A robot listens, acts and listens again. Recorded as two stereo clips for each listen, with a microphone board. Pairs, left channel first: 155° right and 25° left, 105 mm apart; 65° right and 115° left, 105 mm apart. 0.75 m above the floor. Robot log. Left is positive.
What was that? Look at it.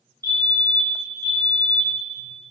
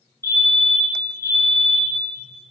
note: The fire alarm: 65° left.
cmd yaw +65
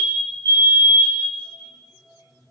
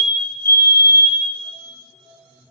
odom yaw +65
note: The fire alarm is now 15° right.
cmd yaw -15
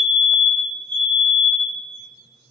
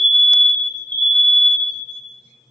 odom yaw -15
end: Found it: a fire alarm, straight ahead.